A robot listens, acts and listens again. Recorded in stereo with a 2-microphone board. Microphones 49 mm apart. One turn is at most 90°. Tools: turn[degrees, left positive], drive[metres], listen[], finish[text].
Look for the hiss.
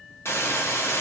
Thought: The hiss: about 75° left or 105° left.
Action: turn[75]
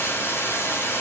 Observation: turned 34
Thought: So it is at 65° left.
Action: turn[65]
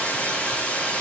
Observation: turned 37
Thought: The hiss is now 30° left.
Action: turn[30]
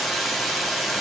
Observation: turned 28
Action: finish[Facing the hiss, 1 to 2 m away.]